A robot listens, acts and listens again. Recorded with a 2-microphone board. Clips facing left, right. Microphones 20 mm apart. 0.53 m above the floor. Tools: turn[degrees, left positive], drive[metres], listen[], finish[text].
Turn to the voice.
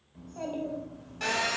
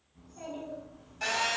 Action: turn[90]
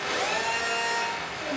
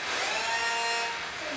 Action: finish[Facing the child speaking.]